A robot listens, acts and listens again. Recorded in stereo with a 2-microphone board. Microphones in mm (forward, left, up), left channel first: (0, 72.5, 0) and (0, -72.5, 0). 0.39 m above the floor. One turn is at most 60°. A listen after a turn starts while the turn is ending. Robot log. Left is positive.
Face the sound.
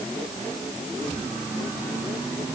cmd idle
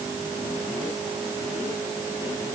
cmd idle
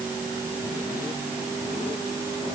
end: I can't make out anything.